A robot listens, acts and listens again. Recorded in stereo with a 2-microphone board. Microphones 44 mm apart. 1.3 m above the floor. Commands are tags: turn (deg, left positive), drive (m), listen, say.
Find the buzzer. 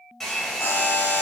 <turn deg="60"/>
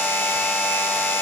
<turn deg="50"/>
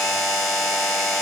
<say>Facing the buzzer.</say>